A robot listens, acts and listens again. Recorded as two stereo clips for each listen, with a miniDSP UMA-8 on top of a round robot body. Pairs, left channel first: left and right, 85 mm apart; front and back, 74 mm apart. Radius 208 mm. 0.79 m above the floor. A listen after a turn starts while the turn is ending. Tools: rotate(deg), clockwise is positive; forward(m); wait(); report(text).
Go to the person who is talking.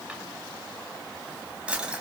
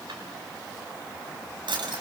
wait()
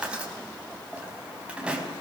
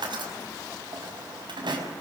wait()
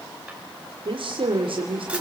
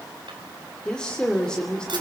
rotate(80)
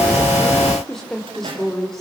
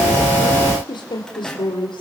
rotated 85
forward(1.0)
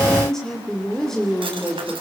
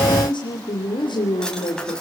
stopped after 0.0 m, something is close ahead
report("Blocked. The woman speaking is further on, straight ahead.")